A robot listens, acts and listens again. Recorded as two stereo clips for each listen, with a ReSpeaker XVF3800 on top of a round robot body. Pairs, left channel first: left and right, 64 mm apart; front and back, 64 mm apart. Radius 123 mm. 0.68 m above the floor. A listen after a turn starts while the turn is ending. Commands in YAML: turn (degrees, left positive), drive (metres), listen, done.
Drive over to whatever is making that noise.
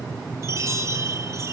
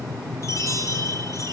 turn: -45
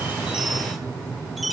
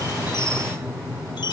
drive: 1.0
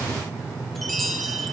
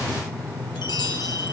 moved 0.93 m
drive: 1.0
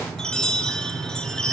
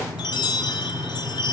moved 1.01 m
turn: 10
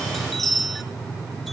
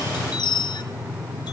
drive: 1.0
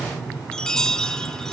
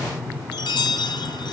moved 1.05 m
turn: 10
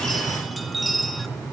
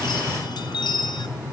drive: 1.0
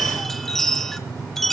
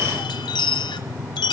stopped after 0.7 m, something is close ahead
done: "Arrived at the chime, straight ahead."